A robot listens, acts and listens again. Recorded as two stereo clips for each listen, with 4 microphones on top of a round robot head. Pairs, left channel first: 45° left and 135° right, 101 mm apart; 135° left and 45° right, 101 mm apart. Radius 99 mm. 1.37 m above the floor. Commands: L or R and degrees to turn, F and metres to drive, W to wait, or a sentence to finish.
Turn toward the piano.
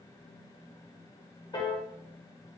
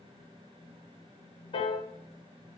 L95
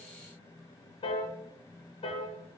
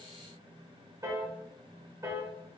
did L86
L10
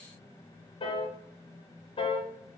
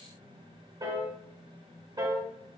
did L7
Found it: a piano, straight ahead, 1 to 2 m away.